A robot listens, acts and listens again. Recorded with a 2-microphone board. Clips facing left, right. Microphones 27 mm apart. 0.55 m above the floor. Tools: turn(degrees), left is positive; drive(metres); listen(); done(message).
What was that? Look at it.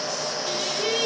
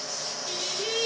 turn(degrees=35)
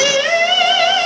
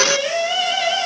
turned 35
turn(degrees=115)
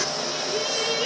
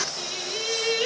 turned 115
turn(degrees=-20)
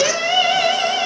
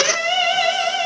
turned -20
done("Facing the singing, over 4 m away.")